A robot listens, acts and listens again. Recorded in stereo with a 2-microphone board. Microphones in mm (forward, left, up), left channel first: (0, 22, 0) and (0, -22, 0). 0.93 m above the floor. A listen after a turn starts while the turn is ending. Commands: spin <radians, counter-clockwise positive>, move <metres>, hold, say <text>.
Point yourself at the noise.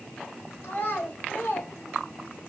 spin 0.70
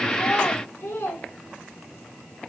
spin 1.66
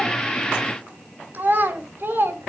spin -0.87
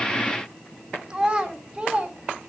spin -0.26
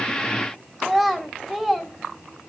say Found it: a child speaking, straight ahead, 2 to 4 m away.